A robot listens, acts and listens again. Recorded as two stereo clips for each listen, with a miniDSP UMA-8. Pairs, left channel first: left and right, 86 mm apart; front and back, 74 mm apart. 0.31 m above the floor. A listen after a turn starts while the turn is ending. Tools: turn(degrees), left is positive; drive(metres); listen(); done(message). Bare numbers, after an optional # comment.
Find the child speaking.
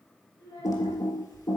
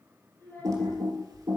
# The child speaking: 55° left.
turn(55)
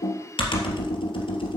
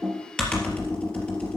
listen()
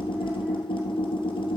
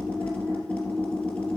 listen()
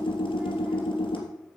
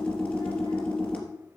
done("I heard a child speaking from this way, but can't make it out now.")